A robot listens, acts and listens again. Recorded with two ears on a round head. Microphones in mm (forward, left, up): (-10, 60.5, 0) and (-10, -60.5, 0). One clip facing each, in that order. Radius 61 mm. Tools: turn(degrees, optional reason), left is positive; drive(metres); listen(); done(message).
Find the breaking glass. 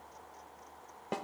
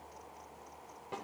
listen()
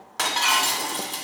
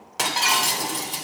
turn(degrees=-30)
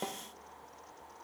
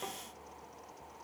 listen()
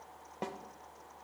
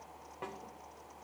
done("I heard breaking glass, but can't make it out now. It was about 20° left or 140° right.")